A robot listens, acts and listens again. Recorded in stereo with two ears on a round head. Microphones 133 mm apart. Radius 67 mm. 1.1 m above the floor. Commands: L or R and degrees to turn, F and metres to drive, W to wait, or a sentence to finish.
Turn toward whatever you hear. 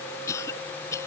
L20
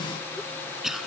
Facing the cough.